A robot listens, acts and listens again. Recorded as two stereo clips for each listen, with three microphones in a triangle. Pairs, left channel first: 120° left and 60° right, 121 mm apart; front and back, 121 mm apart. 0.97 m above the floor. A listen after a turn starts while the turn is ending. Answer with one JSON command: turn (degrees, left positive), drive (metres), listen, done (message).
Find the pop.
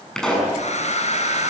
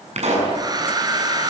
{"turn": -155}
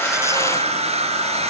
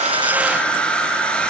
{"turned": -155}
{"done": "I heard a pop from this way, but can't make it out now."}